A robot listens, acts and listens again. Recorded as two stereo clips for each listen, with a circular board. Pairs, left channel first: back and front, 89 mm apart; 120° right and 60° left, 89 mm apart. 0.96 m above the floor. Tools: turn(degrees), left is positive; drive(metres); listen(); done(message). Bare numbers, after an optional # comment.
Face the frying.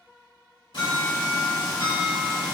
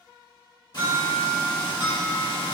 # The frying: 155° right.
turn(-155)
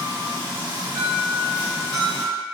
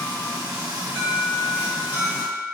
done("Facing the frying.")